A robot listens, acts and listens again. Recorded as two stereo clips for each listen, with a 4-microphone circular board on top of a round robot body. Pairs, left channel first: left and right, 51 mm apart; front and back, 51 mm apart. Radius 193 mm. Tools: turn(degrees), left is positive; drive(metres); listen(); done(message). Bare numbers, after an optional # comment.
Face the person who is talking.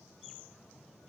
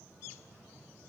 listen()
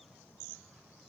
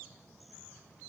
listen()
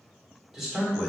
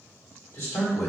done("Facing the man speaking, 2 to 4 m away.")